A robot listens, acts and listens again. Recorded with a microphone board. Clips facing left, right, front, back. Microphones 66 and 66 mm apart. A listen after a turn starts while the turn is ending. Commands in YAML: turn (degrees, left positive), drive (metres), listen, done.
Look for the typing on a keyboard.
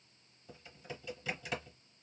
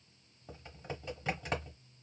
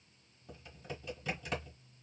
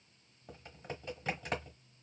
turn: -135
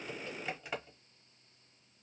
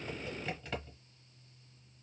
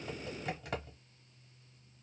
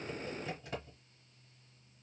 turn: 10
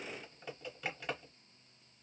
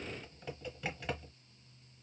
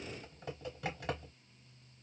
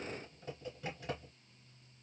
done: "Facing the typing on a keyboard, 1 to 2 m away."